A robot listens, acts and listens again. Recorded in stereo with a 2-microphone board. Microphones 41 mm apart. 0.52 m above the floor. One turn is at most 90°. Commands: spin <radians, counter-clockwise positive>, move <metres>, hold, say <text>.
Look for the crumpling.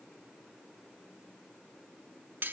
hold
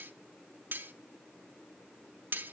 hold
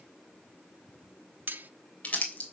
spin 0.61
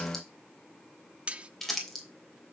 say Found it: crumpling, straight ahead.